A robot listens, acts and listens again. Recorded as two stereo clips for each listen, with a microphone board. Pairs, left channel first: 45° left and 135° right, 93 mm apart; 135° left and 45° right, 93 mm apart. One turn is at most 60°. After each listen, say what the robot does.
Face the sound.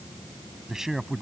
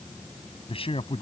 Turn 60° left.
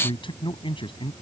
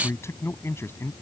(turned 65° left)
Turn 60° left.
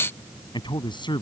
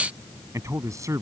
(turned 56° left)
Turn 10° left.
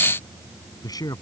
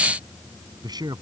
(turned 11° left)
Facing the man speaking.